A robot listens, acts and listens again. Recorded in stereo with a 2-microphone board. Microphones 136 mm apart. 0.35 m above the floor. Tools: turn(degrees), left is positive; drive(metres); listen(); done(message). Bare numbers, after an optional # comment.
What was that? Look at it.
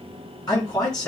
# The man speaking: about 30° left or 150° left.
turn(30)
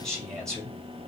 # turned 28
done("Found it: a man speaking, straight ahead.")